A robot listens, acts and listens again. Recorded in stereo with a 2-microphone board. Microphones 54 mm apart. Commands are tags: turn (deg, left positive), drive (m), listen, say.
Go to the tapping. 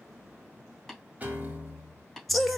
<turn deg="30"/>
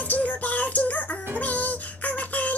<listen/>
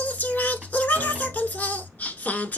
<listen/>
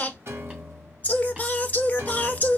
<say>I heard tapping, but can't make it out now. It was about 30° right or 150° left. I did not reach it.</say>